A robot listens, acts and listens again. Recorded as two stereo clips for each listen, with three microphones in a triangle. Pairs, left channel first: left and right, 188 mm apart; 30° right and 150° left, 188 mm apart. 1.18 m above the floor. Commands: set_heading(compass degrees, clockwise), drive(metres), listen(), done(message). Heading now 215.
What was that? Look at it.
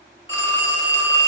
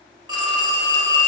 set_heading(130)
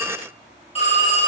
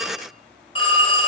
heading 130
set_heading(95)
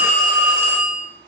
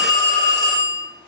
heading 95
set_heading(85)
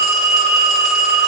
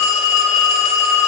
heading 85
done("Facing the phone ringing, 2 to 4 m away.")